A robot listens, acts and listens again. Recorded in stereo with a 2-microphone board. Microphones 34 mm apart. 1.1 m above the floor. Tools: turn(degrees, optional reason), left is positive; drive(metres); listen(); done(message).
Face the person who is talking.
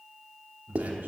turn(degrees=-90)
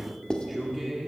done("Facing the man speaking, 2 to 4 m away.")